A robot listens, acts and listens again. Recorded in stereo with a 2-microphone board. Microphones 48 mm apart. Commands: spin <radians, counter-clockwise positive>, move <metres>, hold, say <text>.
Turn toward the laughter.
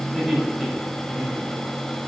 spin -0.52
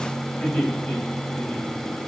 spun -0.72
spin 0.52
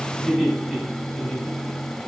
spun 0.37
say Facing the laughter, over 4 m away.